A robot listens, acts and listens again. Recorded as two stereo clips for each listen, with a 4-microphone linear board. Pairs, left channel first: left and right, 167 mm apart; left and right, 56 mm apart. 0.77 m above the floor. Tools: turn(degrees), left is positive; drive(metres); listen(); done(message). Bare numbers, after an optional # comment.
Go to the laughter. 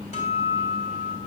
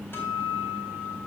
listen()
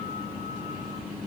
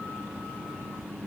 listen()
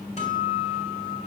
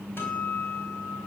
done("I can't make out laughter to turn to.")